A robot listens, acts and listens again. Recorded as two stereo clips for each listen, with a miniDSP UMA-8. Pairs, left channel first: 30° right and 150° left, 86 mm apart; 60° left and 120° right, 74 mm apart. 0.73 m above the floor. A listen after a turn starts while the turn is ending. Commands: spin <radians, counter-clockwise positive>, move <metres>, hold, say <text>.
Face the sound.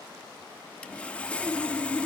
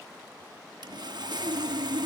spin -1.83
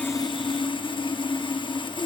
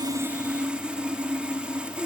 spin -0.79
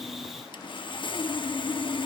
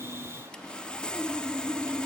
spin -0.26
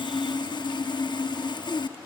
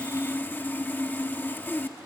say Found it: sawing, straight ahead.